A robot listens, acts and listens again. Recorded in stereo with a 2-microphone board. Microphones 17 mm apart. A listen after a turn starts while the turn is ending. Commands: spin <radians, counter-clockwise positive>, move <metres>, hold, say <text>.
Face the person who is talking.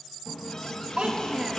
spin -1.13
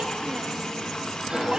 hold
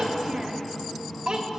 spin -0.79
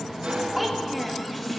say Facing the child speaking.